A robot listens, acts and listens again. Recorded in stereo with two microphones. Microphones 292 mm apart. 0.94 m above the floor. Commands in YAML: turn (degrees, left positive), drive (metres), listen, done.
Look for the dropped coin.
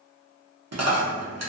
turn: -60
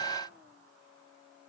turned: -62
listen: true
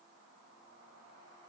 done: "I heard a dropped coin, but can't make it out now. It was about straight ahead or 60° right."